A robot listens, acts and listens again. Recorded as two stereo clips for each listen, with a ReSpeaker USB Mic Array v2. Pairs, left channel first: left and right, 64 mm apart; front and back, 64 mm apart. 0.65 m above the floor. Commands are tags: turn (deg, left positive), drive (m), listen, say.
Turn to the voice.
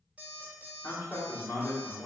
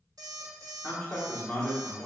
<turn deg="60"/>
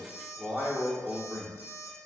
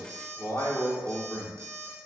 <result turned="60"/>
<say>Facing the man speaking.</say>